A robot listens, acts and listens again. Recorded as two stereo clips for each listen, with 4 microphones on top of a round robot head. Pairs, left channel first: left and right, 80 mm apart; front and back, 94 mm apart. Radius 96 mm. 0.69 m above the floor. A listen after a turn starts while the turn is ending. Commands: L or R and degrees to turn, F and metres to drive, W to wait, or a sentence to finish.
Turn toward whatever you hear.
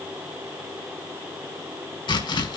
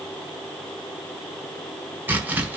L110
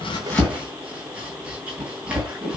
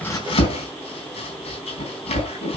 R10
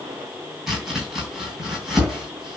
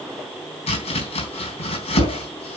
Facing the chopping, 2 to 4 m away.